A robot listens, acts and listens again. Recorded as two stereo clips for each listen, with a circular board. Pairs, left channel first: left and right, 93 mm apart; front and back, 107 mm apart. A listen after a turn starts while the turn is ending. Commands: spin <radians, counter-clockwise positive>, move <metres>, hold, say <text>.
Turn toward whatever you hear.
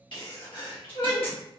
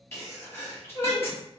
spin 1.13
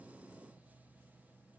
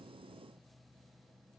say I heard a sneeze from this way, but can't make it out now.